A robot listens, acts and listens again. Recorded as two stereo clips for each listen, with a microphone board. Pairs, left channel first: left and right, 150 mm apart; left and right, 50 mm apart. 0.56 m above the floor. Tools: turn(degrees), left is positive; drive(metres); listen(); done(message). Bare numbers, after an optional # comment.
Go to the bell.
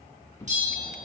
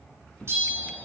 # The bell: about 55° right or 125° right.
turn(-55)
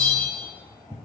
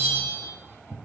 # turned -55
# So it is at 70° right.
turn(-70)
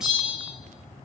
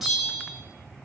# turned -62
drive(1.0)
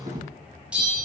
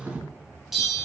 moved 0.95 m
# The bell is now 10° right.
turn(-10)
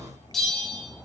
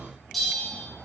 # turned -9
drive(1.0)
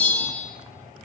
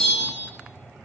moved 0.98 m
# The bell is now 10° left.
turn(10)
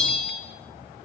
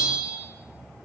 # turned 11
drive(1.0)
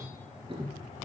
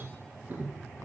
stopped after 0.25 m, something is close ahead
listen()
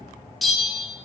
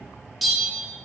done("Arrived at the bell, straight ahead.")